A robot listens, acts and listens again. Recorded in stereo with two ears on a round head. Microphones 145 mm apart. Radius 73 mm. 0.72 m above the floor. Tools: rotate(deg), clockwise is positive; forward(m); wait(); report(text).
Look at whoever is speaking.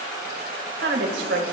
rotate(90)
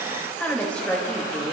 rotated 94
rotate(-10)
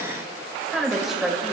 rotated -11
report("Found it: a woman speaking, straight ahead.")